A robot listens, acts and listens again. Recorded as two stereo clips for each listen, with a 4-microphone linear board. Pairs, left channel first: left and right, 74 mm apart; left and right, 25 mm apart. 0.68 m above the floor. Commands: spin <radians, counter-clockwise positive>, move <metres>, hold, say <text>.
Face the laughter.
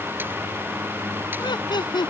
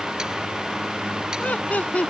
spin 1.57
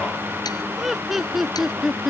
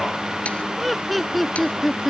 say Found it: laughter, straight ahead.